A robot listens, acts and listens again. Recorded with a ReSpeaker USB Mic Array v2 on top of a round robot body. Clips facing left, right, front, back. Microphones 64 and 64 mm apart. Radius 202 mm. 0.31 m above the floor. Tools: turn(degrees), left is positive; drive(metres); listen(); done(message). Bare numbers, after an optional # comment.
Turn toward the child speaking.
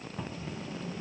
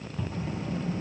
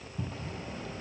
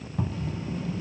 # The child speaking: 50° right.
turn(-50)
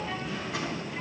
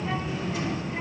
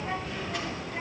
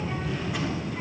# The child speaking is now 20° right.
turn(-20)
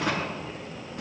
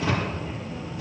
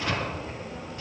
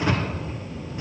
done("Found it: a child speaking, straight ahead.")